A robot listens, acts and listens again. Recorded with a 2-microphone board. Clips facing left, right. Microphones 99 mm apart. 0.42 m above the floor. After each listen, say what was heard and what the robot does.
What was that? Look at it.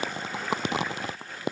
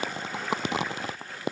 Keep listening.
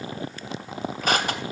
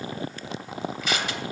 The crushing: about 45° left or 135° left. Turn 45° left.
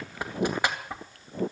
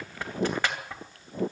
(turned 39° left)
So it is at 15° left. Turn 15° left.
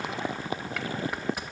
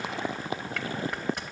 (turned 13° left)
Found it: crushing, straight ahead.